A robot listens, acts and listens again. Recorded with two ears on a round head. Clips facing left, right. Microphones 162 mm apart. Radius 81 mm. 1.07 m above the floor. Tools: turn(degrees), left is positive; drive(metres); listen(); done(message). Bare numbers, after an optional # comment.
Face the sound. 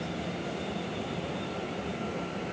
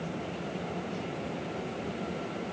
listen()
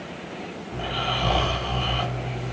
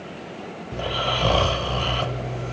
turn(-90)
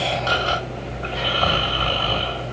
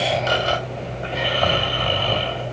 # So it is at 15° right.
turn(-15)
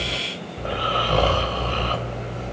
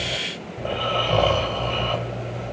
done("Found it: snoring, straight ahead, 2 to 4 m away.")